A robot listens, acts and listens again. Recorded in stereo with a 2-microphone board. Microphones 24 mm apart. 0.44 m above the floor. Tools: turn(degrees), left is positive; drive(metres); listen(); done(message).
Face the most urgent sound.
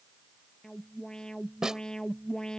turn(degrees=30)
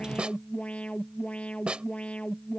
turn(degrees=120)
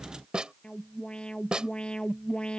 turn(degrees=45)
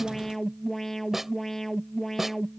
turn(degrees=15)
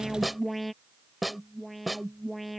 done("Found it: an alarm, straight ahead.")